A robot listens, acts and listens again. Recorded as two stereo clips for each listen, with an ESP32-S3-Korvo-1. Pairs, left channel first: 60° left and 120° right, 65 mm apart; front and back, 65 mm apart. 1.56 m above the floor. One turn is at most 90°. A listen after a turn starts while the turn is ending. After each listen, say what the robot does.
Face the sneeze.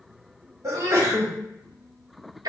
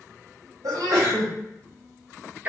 Turn 90° right.
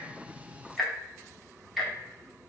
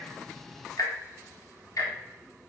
Turn 70° right.
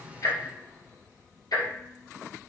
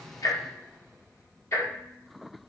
I heard a sneeze from this way, but can't make it out now.